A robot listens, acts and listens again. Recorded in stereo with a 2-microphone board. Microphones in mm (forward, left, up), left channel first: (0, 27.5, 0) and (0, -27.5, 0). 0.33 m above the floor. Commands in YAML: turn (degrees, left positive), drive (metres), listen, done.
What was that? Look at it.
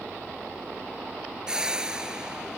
turn: -30
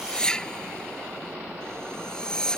turn: 15
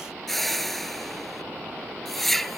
done: "Found it: a whoosh, straight ahead."